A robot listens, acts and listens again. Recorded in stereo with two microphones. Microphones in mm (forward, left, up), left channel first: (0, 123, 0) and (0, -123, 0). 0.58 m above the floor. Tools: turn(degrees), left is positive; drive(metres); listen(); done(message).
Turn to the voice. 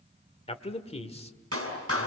turn(degrees=25)
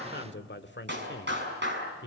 turn(degrees=130)
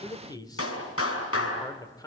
turn(degrees=15)
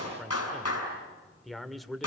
done("Found it: a man speaking, straight ahead.")